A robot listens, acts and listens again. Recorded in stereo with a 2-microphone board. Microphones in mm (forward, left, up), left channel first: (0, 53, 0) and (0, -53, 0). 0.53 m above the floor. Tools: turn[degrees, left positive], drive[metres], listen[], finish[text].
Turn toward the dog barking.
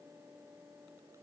Action: listen[]
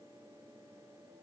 Action: listen[]
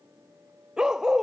Action: turn[-30]
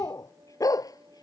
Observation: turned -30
Thought: So it is at 35° left.
Action: turn[35]
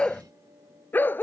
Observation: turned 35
Thought: The dog barking is now 20° left.
Action: turn[20]
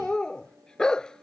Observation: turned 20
Action: finish[Facing the dog barking.]